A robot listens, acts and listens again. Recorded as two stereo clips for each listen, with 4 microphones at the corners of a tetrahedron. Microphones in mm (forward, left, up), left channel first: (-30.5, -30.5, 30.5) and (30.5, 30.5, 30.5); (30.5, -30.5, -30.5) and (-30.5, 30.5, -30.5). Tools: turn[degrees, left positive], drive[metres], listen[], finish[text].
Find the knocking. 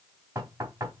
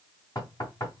Thought: The knocking: 10° right.
Action: turn[-10]
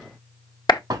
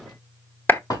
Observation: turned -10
Action: finish[Facing the knocking, 2 to 4 m away.]